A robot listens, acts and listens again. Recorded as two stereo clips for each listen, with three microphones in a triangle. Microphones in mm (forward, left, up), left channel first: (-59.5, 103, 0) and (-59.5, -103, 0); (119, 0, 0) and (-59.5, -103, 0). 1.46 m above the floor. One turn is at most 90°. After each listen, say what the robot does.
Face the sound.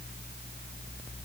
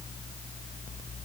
Keep listening.
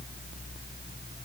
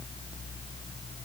Keep listening.
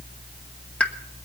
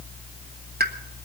Turn 90° left.
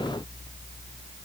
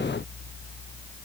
Turn 85° left.
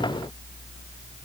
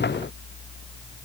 Facing where the pop came from. I can't hear it now.